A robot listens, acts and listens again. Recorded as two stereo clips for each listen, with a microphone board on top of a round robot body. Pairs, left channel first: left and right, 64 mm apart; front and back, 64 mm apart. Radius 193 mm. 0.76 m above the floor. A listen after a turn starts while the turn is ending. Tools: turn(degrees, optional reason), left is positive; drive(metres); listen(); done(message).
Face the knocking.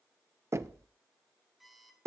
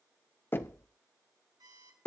turn(degrees=-50, reason="The knocking: 50° right.")
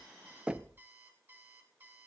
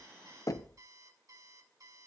turn(degrees=-20, reason="The knocking is now 20° right.")
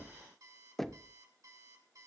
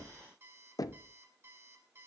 done("Facing the knocking, under 1 m away.")